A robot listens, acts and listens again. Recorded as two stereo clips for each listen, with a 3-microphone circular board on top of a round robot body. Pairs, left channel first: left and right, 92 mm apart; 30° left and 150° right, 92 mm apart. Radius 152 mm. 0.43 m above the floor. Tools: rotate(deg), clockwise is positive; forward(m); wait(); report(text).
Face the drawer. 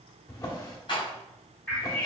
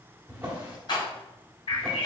rotate(-140)
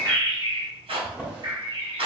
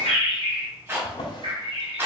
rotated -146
report("Facing the drawer, 1 to 2 m away.")